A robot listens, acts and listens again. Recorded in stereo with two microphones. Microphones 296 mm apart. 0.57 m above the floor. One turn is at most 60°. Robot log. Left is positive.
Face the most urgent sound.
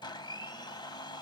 cmd idle
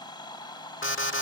note: The alarm: about 45° left or 135° left.
cmd yaw +45
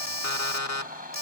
note: So it is at 85° left.
cmd yaw +60
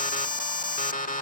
note: The alarm is now 30° left.
cmd yaw +30
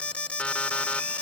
end: Found it: an alarm, straight ahead.